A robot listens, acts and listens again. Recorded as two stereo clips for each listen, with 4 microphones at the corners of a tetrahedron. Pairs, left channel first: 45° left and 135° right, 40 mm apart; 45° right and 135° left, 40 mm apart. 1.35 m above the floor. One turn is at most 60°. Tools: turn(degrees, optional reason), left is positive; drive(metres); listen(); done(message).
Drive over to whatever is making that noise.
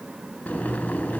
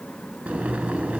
turn(degrees=60, reason="The boiling: 95° left.")
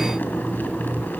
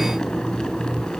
turn(degrees=35, reason="The boiling is now 35° left.")
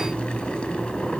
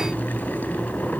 drive(metres=1.0)
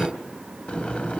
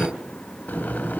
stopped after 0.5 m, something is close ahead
done("Blocked. The boiling is further on, straight ahead.")